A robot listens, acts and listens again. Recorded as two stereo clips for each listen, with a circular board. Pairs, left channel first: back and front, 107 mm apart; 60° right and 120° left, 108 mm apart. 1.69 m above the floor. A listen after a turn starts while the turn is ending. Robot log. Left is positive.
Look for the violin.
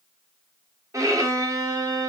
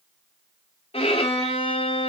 note: The violin: 55° right.
cmd yaw -55
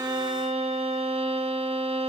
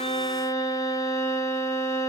end: Facing the violin.